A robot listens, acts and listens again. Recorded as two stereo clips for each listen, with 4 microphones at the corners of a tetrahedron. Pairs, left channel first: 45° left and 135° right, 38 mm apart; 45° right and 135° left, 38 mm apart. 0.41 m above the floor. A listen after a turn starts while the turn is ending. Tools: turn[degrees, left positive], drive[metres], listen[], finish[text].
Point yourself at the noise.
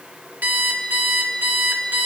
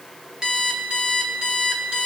Thought: The alarm clock: 160° right.
Action: turn[-160]
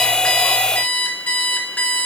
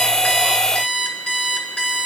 Thought: The alarm clock is now 15° left.
Action: turn[15]
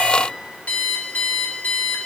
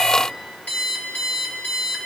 Action: finish[Found it: an alarm clock, straight ahead, 2 to 4 m away.]